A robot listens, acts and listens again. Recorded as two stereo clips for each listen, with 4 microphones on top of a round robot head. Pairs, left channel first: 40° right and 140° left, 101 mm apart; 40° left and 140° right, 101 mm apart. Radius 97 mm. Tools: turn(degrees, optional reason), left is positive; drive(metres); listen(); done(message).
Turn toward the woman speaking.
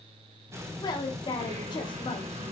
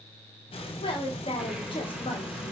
done("Found it: a woman speaking, straight ahead, 2 to 4 m away.")